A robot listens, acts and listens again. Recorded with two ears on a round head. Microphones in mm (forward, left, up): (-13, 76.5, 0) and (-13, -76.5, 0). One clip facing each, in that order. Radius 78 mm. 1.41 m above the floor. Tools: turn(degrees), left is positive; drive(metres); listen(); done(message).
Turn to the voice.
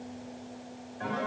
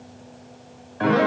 listen()
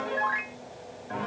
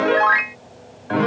listen()
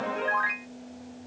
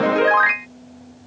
done("I can't make out anyone speaking, only a piano.")